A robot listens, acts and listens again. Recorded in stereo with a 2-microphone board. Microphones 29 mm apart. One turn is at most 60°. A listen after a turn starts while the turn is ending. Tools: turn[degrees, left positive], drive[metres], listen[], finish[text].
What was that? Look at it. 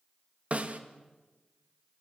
Thought: The snare drum: about 50° right or 130° right.
Action: turn[-50]
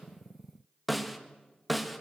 Action: finish[Found it: a snare drum, straight ahead.]